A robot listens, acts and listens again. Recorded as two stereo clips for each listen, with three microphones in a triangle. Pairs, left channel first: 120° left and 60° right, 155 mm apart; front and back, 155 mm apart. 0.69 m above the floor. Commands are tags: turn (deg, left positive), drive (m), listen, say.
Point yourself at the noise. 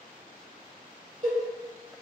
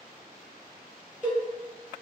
<turn deg="-105"/>
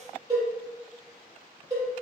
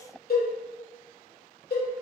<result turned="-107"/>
<say>Found it: a cowbell, straight ahead, 1 to 2 m away.</say>